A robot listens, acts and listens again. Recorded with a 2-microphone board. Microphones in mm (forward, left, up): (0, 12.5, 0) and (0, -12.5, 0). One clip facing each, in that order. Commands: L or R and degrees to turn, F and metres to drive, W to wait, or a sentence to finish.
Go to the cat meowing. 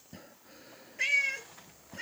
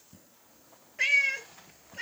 R30
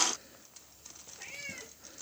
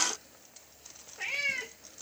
R140
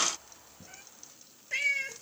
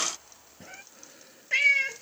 R25
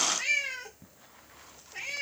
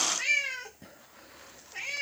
F1.0
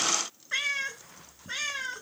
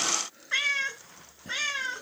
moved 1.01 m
R10
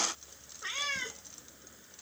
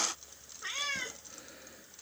F1.0
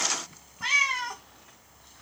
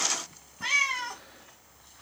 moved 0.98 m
F1.0
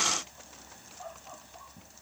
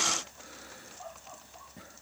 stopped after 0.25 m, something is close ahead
W
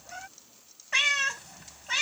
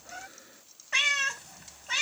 Arrived at the cat meowing, straight ahead.